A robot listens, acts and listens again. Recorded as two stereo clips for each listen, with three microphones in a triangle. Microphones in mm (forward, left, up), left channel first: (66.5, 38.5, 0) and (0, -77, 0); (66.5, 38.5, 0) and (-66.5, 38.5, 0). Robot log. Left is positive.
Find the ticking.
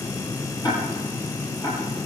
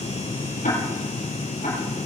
end: Facing the ticking.